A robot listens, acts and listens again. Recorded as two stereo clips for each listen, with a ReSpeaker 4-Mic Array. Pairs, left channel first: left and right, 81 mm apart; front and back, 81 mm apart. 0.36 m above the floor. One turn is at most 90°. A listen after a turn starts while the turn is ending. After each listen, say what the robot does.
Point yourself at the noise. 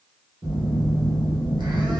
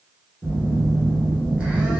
Turn 90° right.
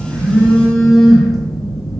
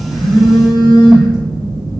Facing the phone buzzing, under 1 m away.